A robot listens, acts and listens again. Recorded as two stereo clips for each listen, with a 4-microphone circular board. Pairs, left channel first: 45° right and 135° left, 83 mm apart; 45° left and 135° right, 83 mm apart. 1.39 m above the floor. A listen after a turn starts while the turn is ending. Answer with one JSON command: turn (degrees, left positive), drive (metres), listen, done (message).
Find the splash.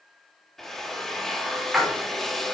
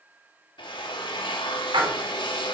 {"turn": -140}
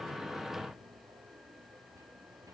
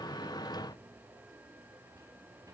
{"done": "Facing where the splash came from. I can't hear it now."}